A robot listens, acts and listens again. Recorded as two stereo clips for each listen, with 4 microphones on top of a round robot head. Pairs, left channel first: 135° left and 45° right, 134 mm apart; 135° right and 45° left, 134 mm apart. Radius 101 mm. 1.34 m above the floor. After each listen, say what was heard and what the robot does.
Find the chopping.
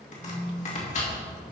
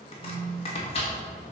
The chopping: 175° left. Turn 175° left.
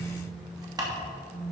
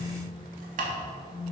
The chopping is now 20° left. Turn 20° left.
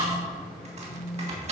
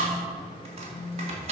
Facing the chopping.